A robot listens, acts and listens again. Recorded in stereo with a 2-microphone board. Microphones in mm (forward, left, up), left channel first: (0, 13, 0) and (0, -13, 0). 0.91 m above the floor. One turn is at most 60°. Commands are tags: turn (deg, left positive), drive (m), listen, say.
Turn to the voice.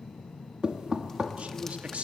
<turn deg="-60"/>
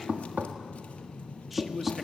<say>Facing the man speaking.</say>